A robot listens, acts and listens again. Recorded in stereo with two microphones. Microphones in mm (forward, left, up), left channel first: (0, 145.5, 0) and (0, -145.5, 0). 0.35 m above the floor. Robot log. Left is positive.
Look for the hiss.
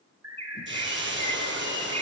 note: The hiss: about 40° right or 140° right.
cmd yaw -40
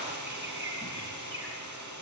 note: So it is at 100° right.
cmd yaw -100
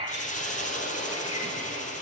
note: The hiss is now 25° left.
cmd yaw +25
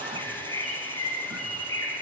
cmd idle
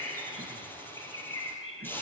end: Found it: a hiss, straight ahead.